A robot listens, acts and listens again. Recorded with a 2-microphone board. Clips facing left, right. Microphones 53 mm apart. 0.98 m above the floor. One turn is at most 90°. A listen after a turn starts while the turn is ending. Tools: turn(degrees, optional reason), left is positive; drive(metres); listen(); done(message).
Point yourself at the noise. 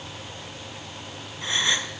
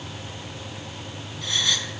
turn(degrees=25, reason="The gasp: about 25° left or 155° left.")
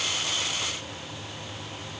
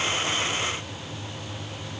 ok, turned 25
listen()
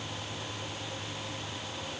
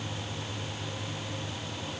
done("I heard a gasp, but can't make it out now. It was about straight ahead or 130° left.")